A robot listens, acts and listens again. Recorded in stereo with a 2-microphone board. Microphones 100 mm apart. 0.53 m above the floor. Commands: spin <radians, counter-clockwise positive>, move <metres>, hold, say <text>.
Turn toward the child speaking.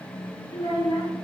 spin 1.57
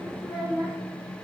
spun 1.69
spin -0.17
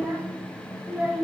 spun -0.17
spin -0.26
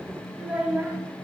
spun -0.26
spin -0.26
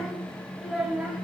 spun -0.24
say Facing the child speaking.